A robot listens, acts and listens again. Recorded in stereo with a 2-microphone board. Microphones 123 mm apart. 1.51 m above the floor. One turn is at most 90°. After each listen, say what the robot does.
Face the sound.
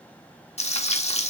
Turn 60° left.
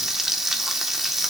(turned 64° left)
Found it: frying, straight ahead.